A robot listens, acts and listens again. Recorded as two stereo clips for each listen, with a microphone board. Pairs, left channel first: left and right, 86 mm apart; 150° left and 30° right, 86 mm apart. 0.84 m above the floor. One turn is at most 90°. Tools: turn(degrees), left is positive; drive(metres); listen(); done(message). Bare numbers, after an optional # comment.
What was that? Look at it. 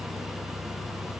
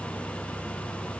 listen()
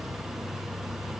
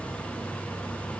listen()
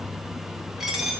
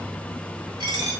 done("Found it: a dropped coin, straight ahead, 2 to 4 m away.")